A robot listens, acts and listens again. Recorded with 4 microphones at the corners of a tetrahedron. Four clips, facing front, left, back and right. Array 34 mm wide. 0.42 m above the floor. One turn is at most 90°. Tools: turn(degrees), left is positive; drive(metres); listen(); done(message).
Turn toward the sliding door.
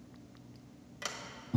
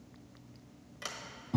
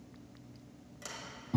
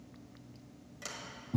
turn(degrees=30)
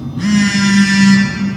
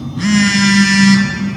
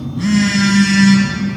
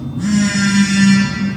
listen()
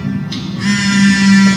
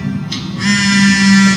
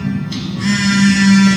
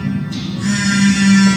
listen()
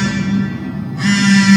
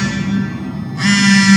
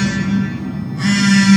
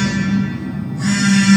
done("Facing where the sliding door came from. I can't hear it now.")